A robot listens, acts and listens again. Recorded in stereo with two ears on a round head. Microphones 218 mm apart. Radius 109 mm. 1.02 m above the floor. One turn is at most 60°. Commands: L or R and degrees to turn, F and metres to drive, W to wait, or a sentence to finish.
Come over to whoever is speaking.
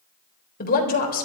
L40
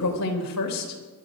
L60
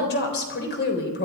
L45
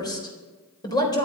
L15
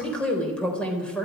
F1.0
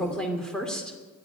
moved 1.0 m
F1.0
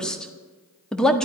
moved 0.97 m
F1.0
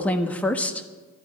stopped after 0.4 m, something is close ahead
Arrived at the woman speaking, straight ahead.